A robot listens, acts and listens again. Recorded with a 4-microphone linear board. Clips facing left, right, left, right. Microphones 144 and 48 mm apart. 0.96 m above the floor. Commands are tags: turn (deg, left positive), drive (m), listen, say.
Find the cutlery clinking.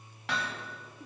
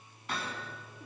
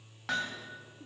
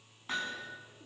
<listen/>
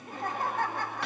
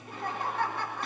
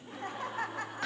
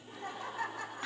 <listen/>
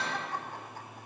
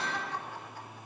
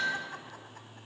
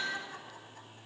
<say>I can't make out cutlery clinking to turn to.</say>